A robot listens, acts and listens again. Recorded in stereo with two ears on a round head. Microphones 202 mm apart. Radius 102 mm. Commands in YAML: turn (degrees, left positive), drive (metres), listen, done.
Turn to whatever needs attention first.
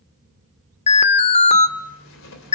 turn: 30
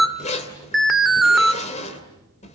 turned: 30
done: "Facing the alarm, 1 to 2 m away."